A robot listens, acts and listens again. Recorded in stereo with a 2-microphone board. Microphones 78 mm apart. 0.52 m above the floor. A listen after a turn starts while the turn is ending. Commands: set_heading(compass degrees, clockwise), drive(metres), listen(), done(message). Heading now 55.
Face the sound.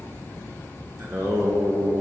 set_heading(85)
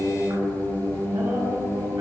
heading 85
set_heading(205)
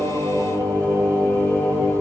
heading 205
set_heading(245)
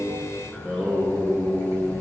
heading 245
done("Found it: singing, straight ahead.")